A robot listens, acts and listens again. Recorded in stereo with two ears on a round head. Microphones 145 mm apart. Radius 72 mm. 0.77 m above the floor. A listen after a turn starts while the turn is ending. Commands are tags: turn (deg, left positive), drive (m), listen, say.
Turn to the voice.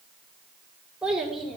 <turn deg="30"/>
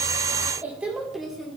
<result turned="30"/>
<turn deg="30"/>
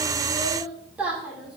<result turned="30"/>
<turn deg="-30"/>
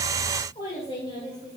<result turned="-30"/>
<turn deg="40"/>
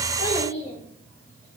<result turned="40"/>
<turn deg="15"/>
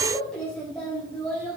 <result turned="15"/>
<say>Facing the child speaking.</say>